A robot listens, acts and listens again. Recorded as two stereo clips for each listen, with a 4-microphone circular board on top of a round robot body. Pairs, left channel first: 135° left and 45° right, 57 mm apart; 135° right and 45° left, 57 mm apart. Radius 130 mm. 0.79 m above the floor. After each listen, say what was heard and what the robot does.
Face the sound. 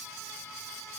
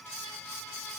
Keep listening.
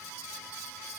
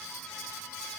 Keep listening.
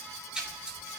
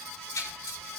The splash: 120° right. Turn 120° right.
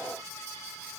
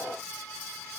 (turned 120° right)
I heard a splash from this way, but can't make it out now.